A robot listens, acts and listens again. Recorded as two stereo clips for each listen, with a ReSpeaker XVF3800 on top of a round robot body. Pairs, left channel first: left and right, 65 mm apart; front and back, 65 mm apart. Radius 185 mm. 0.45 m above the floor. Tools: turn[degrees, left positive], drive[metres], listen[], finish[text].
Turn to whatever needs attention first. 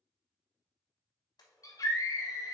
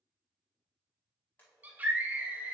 Thought: The scream: 115° left.
Action: turn[115]
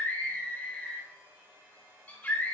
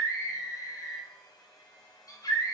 Thought: The scream is now 25° left.
Action: turn[25]
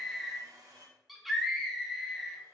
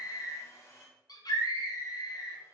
Action: finish[Facing the scream.]